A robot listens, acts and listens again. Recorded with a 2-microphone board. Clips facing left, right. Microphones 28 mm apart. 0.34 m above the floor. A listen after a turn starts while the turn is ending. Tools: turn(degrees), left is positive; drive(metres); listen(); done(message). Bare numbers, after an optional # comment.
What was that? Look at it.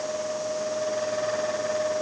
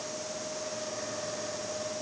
listen()
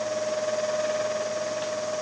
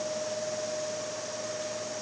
listen()
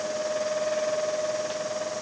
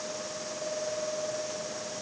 done("I can't make out anything.")